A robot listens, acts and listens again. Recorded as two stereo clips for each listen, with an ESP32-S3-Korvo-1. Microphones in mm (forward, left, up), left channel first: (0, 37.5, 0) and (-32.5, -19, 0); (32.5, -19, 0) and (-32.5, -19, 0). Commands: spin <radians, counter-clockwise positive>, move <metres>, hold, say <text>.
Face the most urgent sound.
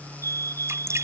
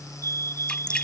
spin -2.62
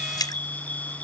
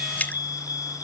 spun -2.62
spin -0.17
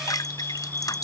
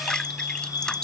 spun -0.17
say Found it: a fire alarm, straight ahead.